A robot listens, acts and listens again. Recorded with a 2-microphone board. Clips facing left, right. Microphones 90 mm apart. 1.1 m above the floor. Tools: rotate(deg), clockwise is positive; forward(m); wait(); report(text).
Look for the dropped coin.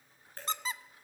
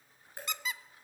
rotate(30)
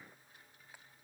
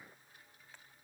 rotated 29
wait()
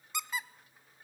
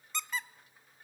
report("I heard a dropped coin, but can't make it out now. It was about 15° left or 135° right.")